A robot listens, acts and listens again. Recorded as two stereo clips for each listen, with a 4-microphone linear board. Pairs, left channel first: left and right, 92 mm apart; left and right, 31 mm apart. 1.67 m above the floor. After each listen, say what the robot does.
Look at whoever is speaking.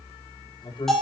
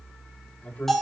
Turn 60° left.
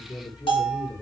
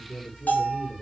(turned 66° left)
Turn 50° left.
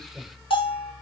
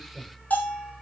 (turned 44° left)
Found it: a man speaking, straight ahead, over 4 m away.